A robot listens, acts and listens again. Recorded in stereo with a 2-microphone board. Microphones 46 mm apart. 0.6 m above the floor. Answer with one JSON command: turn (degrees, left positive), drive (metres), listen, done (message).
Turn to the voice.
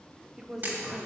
{"turn": -30}
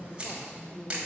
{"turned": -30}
{"turn": 20}
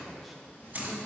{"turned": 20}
{"listen": true}
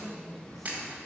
{"done": "Found it: a woman speaking, straight ahead, 1 to 2 m away."}